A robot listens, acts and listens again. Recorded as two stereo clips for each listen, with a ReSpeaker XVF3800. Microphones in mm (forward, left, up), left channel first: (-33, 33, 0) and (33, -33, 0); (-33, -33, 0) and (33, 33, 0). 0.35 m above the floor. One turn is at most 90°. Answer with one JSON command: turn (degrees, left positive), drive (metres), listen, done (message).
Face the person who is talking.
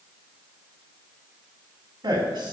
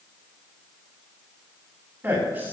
{"turn": -20}
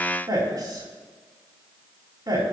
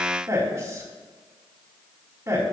{"turn": -10}
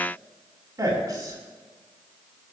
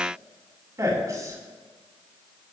{"done": "Found it: a man speaking, straight ahead."}